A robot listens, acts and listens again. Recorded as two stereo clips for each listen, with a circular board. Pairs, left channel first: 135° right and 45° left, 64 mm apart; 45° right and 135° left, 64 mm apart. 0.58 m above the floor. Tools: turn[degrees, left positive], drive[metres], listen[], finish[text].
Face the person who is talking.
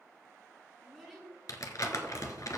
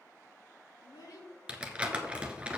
Thought: The child speaking: 45° right.
Action: turn[-45]
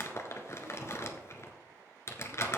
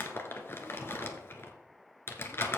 Action: listen[]
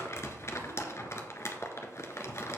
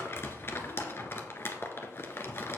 Action: listen[]
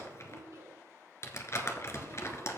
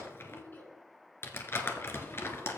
Thought: The child speaking is now 10° left.
Action: turn[10]
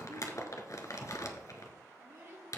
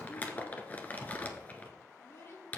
Action: finish[Facing the child speaking, over 4 m away.]